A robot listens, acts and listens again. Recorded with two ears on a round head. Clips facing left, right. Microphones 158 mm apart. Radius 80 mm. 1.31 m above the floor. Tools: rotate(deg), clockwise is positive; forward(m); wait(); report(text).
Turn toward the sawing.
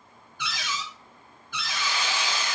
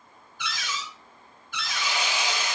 rotate(15)
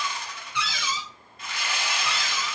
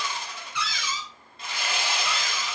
rotate(150)
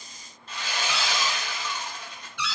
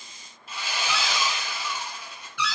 rotate(10)
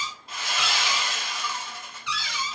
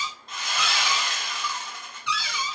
report("Facing the sawing.")